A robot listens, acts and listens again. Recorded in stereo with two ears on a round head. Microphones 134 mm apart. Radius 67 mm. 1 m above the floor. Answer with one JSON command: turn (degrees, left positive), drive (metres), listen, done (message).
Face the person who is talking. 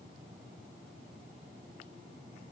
{"listen": true}
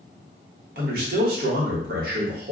{"turn": -70}
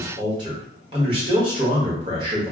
{"turn": -35}
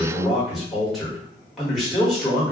{"done": "Found it: a man speaking, straight ahead, 1 to 2 m away."}